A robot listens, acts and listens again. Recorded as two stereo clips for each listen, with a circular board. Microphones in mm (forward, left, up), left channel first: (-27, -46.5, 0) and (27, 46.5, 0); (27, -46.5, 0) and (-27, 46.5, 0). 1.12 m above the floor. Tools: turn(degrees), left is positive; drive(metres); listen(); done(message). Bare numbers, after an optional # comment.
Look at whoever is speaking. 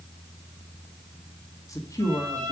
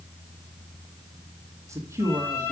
# The man speaking: straight behind.
turn(180)
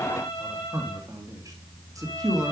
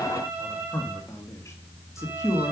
done("Facing the man speaking.")